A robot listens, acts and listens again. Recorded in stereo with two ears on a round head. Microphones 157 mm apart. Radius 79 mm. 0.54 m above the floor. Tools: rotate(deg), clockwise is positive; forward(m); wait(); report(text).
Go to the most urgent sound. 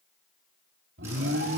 rotate(65)
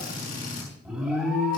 forward(1.0)
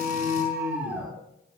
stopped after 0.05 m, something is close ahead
report("Blocked. The alarm is further on, straight ahead.")